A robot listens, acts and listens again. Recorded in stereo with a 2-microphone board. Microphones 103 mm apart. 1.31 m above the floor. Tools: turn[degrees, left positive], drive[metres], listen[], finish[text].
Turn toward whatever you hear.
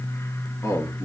Thought: The man speaking: about 30° left or 150° left.
Action: turn[30]
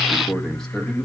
Thought: So it is at 10° left.
Action: turn[10]
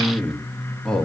Thought: The man speaking is now 10° left.
Action: turn[10]
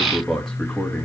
Action: finish[Facing the man speaking, 2 to 4 m away.]